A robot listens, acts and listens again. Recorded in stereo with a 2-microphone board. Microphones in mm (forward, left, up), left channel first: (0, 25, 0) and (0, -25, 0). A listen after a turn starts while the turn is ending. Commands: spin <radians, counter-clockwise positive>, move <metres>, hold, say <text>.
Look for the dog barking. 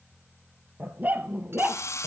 spin -0.70
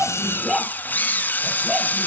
spin -0.17
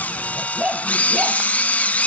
spin -0.35
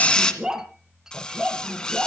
spin -0.35
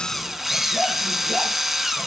hold
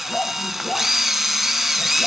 say Found it: a dog barking, straight ahead.